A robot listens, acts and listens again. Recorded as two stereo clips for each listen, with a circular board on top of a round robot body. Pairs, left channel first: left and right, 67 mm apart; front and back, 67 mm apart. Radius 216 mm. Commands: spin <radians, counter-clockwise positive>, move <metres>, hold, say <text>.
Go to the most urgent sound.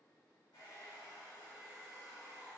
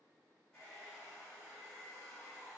hold
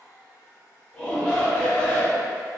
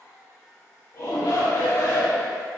spin 0.44
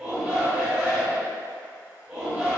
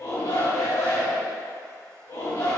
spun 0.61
spin -0.17
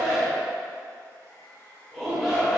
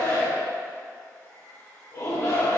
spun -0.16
move 1.0
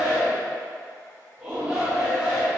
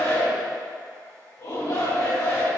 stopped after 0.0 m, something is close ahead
spin -0.17
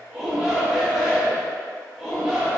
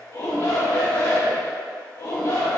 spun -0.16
say Something is in my way. I am facing the shout but have not reached it.